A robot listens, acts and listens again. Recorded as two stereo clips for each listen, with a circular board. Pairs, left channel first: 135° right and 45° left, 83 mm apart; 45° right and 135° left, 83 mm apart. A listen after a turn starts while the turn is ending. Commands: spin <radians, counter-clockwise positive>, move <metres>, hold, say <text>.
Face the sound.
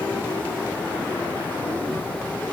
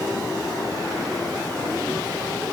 hold
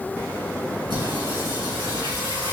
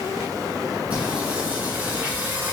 spin 1.22
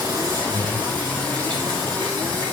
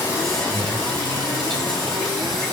spin 0.61
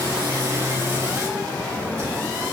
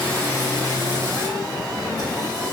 spin -0.17
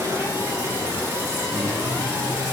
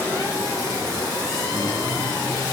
say Found it: singing, straight ahead.